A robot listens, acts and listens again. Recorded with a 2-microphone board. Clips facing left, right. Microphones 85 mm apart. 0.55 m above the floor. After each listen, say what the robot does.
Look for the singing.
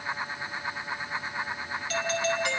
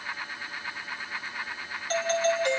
Keep listening.
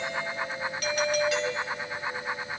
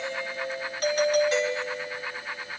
Keep listening.
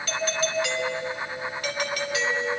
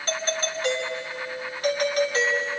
I can't make out singing, only a doorbell.